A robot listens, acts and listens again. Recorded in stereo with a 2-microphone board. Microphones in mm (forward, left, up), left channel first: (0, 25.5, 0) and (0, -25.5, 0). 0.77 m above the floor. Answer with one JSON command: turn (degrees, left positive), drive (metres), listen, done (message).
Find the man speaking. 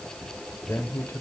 {"turn": 50}
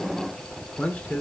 {"turn": 25}
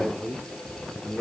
{"turn": 20}
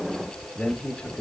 {"turn": 20}
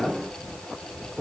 {"done": "Facing the man speaking, 1 to 2 m away."}